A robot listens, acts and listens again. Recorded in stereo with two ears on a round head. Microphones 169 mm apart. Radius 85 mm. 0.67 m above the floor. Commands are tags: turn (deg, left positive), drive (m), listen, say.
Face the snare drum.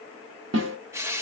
<turn deg="-70"/>
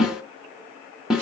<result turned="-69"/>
<say>Found it: a snare drum, straight ahead.</say>